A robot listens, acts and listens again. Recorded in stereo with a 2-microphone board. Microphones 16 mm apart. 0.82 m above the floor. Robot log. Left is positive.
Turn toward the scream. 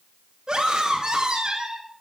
note: The scream: about 50° right or 130° right.
cmd yaw -50
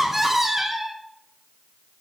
note: So it is at 20° right.
cmd yaw -20
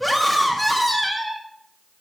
end: Facing the scream, 1 to 2 m away.